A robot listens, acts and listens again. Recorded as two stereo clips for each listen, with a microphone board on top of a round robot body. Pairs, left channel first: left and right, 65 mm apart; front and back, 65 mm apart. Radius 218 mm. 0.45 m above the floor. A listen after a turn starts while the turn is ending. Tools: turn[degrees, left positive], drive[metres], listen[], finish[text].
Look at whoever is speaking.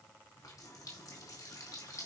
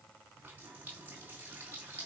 Action: listen[]
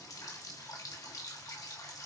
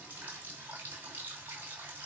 Action: listen[]
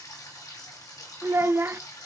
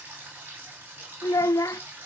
Thought: The child speaking: 35° right.
Action: turn[-35]
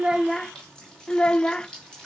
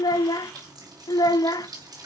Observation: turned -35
Thought: The child speaking is now 10° left.
Action: turn[10]
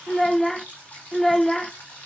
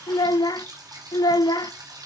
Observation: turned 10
Action: finish[Facing the child speaking, under 1 m away.]